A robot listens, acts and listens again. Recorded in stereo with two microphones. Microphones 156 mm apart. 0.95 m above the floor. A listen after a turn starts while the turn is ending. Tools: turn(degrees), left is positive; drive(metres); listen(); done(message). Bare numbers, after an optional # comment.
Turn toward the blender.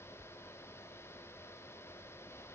listen()
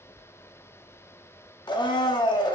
# The blender: about 30° left or 150° left.
turn(30)
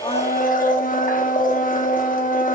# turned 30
# So it is at 120° left.
turn(120)
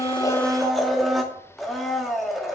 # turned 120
done("Found it: a blender, straight ahead, under 1 m away.")